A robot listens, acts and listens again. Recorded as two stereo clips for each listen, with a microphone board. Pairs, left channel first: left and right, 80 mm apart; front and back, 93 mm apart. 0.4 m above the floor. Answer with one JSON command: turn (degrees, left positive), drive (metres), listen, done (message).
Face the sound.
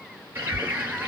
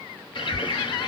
{"turn": -30}
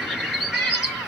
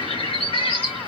{"done": "Found it: a bird, straight ahead."}